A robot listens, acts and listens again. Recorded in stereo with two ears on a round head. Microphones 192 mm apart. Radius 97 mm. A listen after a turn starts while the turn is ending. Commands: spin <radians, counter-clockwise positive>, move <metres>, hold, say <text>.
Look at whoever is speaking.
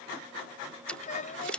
spin 0.70
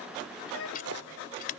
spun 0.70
spin 1.75
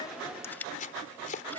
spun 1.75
hold
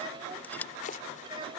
spin -0.44
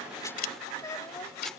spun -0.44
spin 0.26
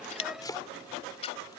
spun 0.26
hold
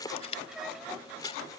hold
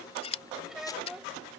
say Facing the child speaking.